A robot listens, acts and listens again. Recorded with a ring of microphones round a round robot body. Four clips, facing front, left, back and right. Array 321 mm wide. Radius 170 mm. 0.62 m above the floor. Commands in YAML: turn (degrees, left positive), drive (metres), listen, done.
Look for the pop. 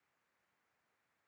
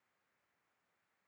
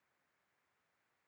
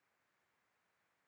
listen: true
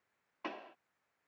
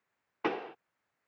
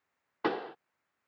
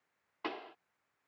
turn: 145
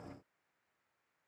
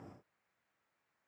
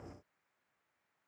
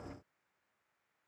done: "Facing where the pop came from. I can't hear it now."